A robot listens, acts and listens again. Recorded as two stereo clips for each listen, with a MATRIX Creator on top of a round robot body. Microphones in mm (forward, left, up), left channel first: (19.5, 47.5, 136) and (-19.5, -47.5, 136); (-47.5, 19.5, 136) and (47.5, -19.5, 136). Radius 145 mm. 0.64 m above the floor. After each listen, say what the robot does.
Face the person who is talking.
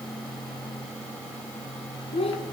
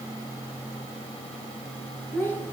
Turn 85° left.
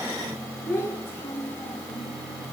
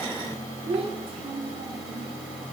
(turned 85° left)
Found it: a child speaking, straight ahead.